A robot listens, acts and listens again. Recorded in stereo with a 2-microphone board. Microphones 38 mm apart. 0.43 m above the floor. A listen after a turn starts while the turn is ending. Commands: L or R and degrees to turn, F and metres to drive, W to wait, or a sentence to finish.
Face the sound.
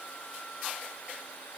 W
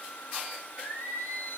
L70
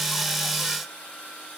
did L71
W
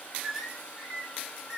R10
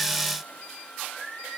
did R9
Found it: singing, straight ahead, 2 to 4 m away.